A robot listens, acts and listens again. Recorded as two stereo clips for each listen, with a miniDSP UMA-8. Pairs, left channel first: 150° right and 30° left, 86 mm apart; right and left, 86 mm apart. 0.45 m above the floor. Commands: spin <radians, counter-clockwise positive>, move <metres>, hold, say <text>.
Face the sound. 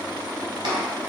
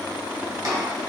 spin 0.87
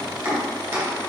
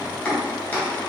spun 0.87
spin -0.35
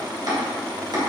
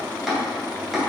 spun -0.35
say Found it: chopping, straight ahead, 1 to 2 m away.